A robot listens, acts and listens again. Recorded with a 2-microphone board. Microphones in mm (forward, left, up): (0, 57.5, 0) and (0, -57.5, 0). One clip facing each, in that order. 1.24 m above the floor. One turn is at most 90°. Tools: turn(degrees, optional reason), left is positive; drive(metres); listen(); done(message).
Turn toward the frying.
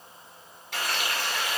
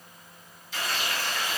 turn(degrees=65, reason="The frying: about 65° left or 115° left.")
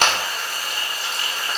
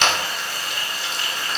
turn(degrees=50, reason="So it is at 50° left.")
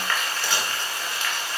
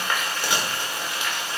turn(degrees=-15, reason="The frying is now 15° right.")
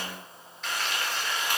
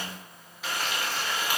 done("Found it: frying, straight ahead, 2 to 4 m away.")